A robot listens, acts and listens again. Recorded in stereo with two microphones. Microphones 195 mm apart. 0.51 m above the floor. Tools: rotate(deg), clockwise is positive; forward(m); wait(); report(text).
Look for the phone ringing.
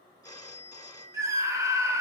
rotate(-20)
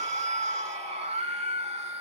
wait()
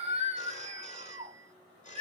rotate(-140)
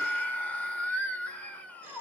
wait()
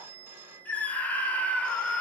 rotate(10)
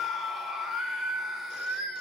wait()
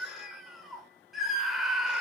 wait()
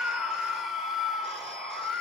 report("Facing where the phone ringing came from. I can't hear it now.")